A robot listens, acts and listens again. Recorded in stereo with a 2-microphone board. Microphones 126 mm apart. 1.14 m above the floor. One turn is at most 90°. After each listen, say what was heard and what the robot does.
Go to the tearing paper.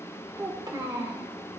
Keep listening.
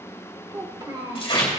The tearing paper: about 40° left or 140° left. Turn 40° left.
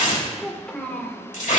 So it is at 95° left. Turn 90° left.
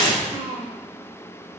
The tearing paper is now 40° left. Turn 40° left.
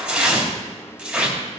Drive 1.0 m forward.
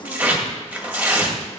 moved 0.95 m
The tearing paper is now 10° right. Turn 10° right.
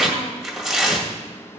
Drive 1.0 m forward.
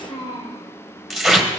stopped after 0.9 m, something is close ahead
I am next to the tearing paper.